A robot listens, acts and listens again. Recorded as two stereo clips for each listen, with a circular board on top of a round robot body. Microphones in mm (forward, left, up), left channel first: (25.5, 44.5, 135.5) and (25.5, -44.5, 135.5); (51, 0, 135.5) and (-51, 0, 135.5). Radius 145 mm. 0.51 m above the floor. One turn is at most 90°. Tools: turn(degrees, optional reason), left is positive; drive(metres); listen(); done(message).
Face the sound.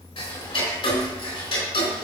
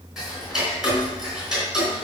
turn(degrees=90, reason="The ticking: 95° left.")
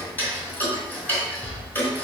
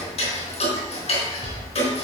turn(degrees=20, reason="The ticking is now 20° left.")
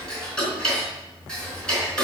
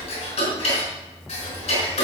turn(degrees=10, reason="The ticking is now 10° left.")
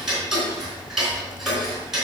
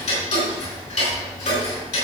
done("Facing the ticking, 2 to 4 m away.")